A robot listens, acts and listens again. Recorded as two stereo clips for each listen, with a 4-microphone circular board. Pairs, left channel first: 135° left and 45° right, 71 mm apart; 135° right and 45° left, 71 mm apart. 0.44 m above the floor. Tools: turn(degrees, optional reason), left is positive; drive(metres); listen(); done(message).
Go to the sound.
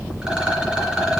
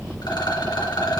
turn(degrees=-125, reason="The rattle: 125° right.")
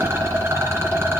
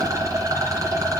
drive(metres=1.0)
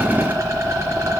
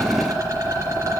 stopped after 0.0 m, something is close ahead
done("Blocked. The rattle is further on, straight ahead.")